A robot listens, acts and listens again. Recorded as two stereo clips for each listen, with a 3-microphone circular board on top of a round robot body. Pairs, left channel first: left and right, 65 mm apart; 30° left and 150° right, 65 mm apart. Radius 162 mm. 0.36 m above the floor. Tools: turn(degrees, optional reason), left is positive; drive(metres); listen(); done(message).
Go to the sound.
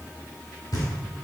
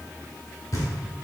turn(degrees=70, reason="The knocking: 70° left.")
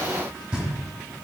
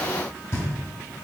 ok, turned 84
turn(degrees=-15, reason="The knocking is now 15° right.")
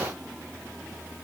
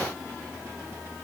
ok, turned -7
turn(degrees=-10, reason="Nothing new. It was at 10° right.")
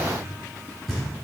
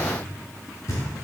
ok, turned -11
drive(metres=1.0)
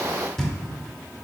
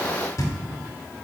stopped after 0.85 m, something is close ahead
done("I am next to the knocking.")